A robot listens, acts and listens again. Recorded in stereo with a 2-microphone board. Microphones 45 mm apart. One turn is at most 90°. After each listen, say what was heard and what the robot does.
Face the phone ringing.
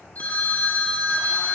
The phone ringing: about 40° left or 140° left. Turn 40° left.
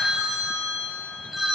Facing the phone ringing.